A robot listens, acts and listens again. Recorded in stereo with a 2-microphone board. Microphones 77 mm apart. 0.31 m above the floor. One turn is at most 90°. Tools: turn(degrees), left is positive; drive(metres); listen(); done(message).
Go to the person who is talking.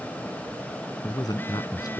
turn(degrees=60)
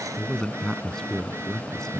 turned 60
turn(degrees=10)
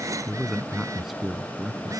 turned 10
drive(metres=1.0)
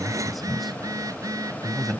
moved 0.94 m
drive(metres=1.0)
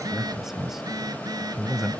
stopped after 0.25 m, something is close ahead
done("Arrived at the man speaking, straight ahead.")